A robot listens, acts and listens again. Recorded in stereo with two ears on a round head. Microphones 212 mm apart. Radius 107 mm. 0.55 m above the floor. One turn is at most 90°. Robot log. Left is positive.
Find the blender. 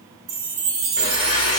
note: The blender: about 20° left or 160° left.
cmd yaw +20
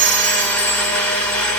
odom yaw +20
end: Facing the blender, 1 to 2 m away.